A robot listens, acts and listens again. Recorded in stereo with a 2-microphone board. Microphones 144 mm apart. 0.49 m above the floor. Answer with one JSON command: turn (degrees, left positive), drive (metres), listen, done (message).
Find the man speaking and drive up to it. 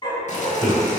{"turn": 25}
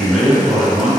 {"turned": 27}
{"drive": 1.0}
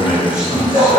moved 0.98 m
{"turn": -10}
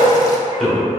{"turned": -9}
{"drive": 1.0}
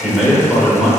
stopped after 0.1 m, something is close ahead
{"done": "Arrived at the man speaking, straight ahead."}